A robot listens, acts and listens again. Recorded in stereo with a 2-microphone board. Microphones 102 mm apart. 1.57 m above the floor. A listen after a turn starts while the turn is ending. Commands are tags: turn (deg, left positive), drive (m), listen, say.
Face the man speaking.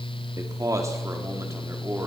<turn deg="-25"/>
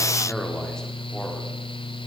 <listen/>
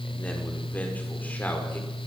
<listen/>
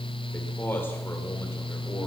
<turn deg="20"/>
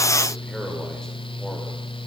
<listen/>
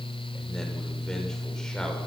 <listen/>
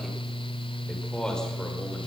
<say>Found it: a man speaking, straight ahead, over 4 m away.</say>